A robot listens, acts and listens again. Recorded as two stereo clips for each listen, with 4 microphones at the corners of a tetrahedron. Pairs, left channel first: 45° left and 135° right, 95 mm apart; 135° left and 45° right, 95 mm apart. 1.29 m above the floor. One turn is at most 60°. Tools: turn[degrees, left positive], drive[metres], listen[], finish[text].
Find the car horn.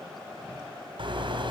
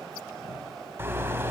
Thought: The car horn: 110° right.
Action: turn[-60]
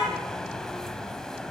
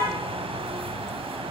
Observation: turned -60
Thought: Nothing new. It was at 50° right.
Action: turn[-50]
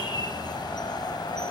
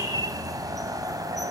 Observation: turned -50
Action: finish[Found it: a car horn, straight ahead.]